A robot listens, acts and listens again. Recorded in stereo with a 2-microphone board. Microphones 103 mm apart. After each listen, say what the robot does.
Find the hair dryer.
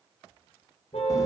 Keep listening.
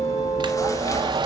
Turn 50° right.
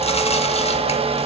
Turn 80° right.
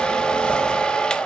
Turn 10° left.
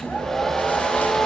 Facing the hair dryer.